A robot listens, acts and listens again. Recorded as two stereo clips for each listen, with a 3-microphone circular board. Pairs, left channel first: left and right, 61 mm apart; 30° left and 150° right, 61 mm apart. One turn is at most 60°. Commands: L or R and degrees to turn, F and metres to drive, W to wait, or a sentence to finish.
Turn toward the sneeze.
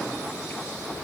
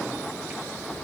W
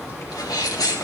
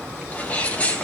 L60
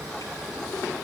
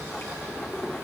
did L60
L35
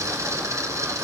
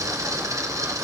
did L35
I heard a sneeze from this way, but can't make it out now.